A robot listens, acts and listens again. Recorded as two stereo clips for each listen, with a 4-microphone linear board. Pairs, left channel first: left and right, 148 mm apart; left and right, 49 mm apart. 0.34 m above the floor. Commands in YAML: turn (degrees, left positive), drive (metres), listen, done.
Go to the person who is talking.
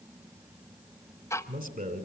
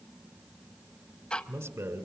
turn: -70
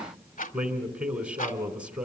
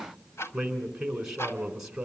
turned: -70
turn: -10
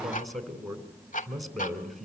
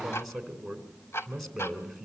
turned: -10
drive: 1.0
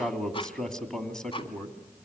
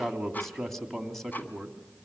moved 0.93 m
drive: 1.0
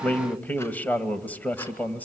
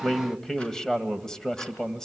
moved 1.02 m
turn: 15
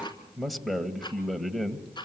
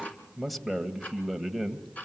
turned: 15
drive: 1.0
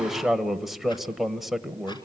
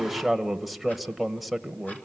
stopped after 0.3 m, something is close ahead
done: "I am next to the man speaking."